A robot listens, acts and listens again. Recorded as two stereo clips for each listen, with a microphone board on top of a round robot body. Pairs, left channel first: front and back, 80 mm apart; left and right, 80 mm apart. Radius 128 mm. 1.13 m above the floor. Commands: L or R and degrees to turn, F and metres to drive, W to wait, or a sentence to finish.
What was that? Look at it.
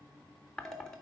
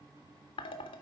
L85
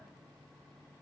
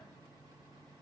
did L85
W
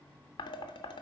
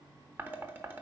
R20
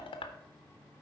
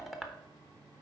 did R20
Facing the dishes clattering.